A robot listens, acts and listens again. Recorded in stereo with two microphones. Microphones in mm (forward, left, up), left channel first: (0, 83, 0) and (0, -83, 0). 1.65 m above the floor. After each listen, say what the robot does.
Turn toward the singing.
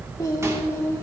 Turn 15° left.
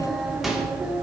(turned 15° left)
Turn 30° right.
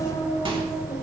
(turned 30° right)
Turn 20° left.
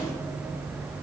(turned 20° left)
Keep listening.
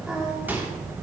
Keep listening.
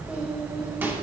I heard singing from this way, but can't make it out now.